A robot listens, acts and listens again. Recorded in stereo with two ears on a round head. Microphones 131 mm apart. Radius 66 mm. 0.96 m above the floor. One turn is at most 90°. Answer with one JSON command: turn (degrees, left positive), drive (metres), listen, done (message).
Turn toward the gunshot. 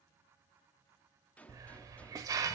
{"turn": 30}
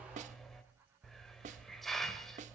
{"listen": true}
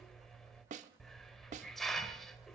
{"done": "I heard a gunshot, but can't make it out now. It was about 20° right or 140° left."}